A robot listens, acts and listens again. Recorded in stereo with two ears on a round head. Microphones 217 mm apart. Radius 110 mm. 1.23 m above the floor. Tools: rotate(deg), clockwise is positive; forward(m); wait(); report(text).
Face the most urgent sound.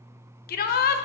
rotate(-40)
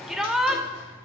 report("Found it: a shout, straight ahead, under 1 m away.")